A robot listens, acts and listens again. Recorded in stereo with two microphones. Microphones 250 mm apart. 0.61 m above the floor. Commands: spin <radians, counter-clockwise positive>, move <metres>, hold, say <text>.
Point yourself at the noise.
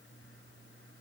hold
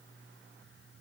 hold
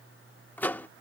spin 0.52
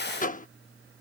spin 2.53
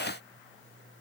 hold
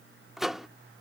say Found it: a microwave, straight ahead.